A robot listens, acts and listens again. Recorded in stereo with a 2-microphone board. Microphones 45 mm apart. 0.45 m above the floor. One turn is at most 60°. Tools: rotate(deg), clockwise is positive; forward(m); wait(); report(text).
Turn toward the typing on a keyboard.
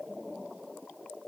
wait()
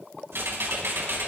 rotate(60)
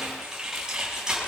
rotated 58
rotate(15)
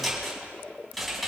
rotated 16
report("Facing the typing on a keyboard, over 4 m away.")